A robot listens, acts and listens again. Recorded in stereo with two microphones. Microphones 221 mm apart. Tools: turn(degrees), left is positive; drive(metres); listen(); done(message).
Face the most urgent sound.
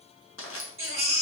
turn(degrees=-70)
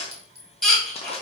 done("Facing the baby crying, 1 to 2 m away.")